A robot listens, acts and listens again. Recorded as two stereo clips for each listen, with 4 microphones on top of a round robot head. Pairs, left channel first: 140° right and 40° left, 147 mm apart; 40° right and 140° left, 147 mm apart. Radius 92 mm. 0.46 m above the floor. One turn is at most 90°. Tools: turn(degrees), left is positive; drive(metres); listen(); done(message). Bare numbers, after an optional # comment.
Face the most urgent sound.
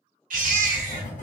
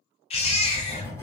# The baby crying: 10° left.
turn(10)
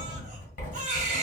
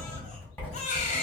done("Found it: a baby crying, straight ahead.")